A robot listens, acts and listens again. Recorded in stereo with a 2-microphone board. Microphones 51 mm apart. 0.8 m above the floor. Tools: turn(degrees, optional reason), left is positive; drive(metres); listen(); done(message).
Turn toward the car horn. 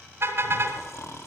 turn(degrees=-50, reason="The car horn: about 50° right or 130° right.")
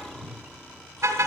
turn(degrees=-75, reason="So it is at 75° right.")
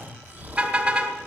turn(degrees=-30, reason="The car horn is now 30° right.")
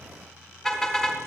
done("Found it: a car horn, straight ahead.")